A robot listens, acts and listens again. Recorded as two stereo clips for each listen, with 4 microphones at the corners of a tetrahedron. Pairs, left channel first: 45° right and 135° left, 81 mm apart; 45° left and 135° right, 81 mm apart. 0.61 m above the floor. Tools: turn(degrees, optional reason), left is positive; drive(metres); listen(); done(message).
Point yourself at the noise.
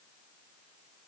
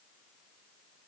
listen()
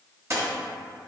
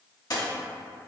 turn(degrees=85, reason="The dropped coin: 85° left.")
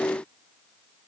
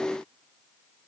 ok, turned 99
turn(degrees=-15, reason="Nothing new. It was at 15° right.")
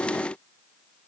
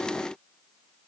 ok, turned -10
done("I heard a dropped coin from this way, but can't make it out now.")